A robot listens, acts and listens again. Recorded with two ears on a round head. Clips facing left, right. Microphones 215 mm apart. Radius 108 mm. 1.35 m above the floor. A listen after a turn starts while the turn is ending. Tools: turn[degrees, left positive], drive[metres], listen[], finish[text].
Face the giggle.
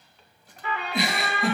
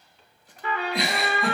Action: turn[30]
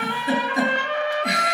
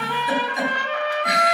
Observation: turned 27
Thought: So it is at 155° left.
Action: turn[155]
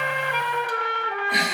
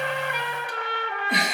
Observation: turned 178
Thought: The giggle is now 25° right.
Action: turn[-25]
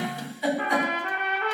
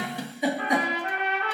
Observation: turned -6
Thought: The giggle is now 15° right.
Action: turn[-15]
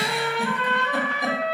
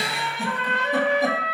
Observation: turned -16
Action: listen[]
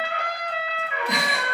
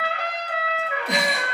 Action: listen[]
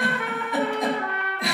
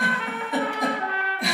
Action: finish[Found it: a giggle, straight ahead.]